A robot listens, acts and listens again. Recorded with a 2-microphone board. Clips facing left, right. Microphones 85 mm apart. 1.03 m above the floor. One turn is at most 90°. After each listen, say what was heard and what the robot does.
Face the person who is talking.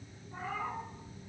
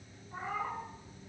Keep listening.
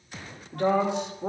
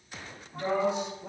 The woman speaking: about 70° left or 110° left. Turn 70° left.
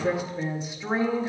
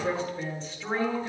So it is at 15° left. Turn 15° left.
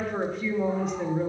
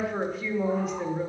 Facing the woman speaking.